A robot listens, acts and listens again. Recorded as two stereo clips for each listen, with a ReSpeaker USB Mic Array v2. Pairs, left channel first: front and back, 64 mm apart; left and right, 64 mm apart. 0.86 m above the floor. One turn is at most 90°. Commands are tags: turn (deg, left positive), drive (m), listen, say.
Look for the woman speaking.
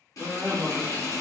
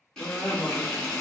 <turn deg="90"/>
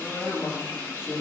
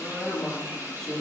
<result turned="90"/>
<turn deg="15"/>
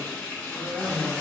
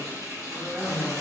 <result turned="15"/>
<turn deg="-35"/>
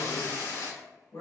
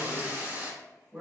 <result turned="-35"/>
<turn deg="-35"/>
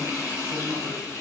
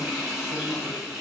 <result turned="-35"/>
<listen/>
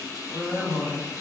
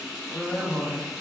<turn deg="-10"/>
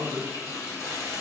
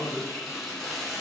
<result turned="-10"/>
<say>Facing the woman speaking, 1 to 2 m away.</say>